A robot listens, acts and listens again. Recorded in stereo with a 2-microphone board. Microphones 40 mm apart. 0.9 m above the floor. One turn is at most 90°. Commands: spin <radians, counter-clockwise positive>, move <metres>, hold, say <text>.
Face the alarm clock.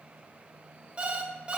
spin -0.44
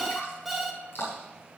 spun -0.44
say Found it: an alarm clock, straight ahead.